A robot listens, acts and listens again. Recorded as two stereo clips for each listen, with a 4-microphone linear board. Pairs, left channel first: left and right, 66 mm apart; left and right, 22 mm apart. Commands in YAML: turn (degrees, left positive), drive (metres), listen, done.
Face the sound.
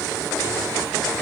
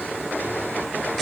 listen: true
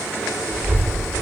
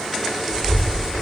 turn: -40
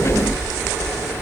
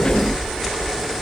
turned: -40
turn: -105
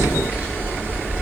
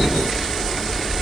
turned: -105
turn: -25
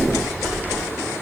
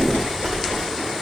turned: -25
done: "Facing the child speaking."